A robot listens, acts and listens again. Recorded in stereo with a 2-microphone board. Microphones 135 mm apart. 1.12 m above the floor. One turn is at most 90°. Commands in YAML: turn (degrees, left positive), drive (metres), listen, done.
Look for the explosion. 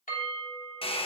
listen: true
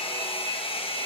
listen: true
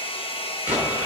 turn: -30
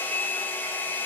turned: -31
listen: true
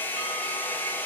done: "I heard an explosion, but can't make it out now. It was about 20° left or 140° right."